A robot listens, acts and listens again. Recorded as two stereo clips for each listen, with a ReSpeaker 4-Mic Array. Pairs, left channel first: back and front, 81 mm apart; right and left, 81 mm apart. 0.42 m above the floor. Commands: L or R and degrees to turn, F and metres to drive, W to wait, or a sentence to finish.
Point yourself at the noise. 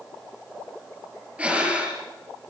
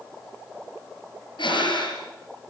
R75
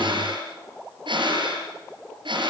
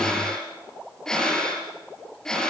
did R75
Facing the breathing.